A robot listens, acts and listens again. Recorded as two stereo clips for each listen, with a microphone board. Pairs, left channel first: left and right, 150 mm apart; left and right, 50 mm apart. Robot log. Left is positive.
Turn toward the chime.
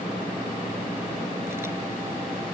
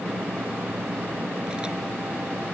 cmd idle
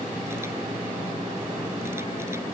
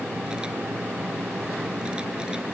cmd idle
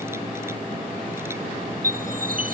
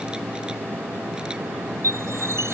note: The chime: about 70° right or 110° right.
cmd yaw -70
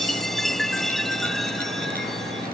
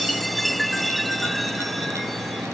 end: Facing the chime.